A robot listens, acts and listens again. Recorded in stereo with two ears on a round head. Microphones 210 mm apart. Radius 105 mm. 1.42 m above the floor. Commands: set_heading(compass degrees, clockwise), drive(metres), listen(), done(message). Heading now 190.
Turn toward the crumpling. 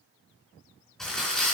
set_heading(160)
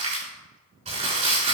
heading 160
set_heading(190)
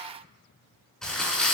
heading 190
done("Facing the crumpling.")